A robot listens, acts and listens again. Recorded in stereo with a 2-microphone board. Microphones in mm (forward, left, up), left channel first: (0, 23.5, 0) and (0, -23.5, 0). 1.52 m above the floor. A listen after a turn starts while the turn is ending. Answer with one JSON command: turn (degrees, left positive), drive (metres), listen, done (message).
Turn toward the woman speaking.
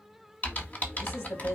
{"turn": 65}
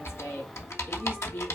{"turn": 50}
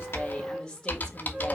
{"turn": 15}
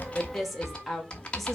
{"done": "Facing the woman speaking."}